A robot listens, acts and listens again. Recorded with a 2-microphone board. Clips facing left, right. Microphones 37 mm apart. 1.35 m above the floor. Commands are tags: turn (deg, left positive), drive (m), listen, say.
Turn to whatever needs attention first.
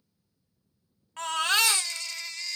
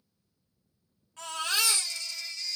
<turn deg="60"/>
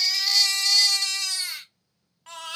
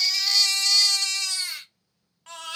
<say>Facing the baby crying, under 1 m away.</say>